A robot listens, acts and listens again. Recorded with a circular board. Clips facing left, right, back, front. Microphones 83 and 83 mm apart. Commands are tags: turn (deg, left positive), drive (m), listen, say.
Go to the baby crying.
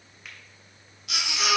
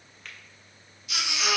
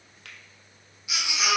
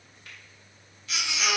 <turn deg="100"/>
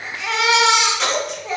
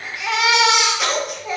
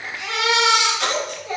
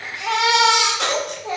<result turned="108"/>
<drive m="1.0"/>
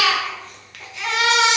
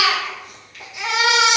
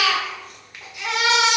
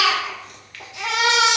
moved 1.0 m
<turn deg="-15"/>
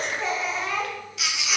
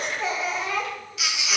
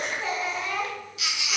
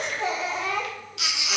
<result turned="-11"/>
<drive m="1.0"/>
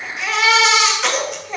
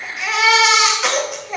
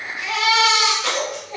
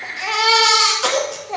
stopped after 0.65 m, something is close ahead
<say>Arrived at the baby crying, straight ahead.</say>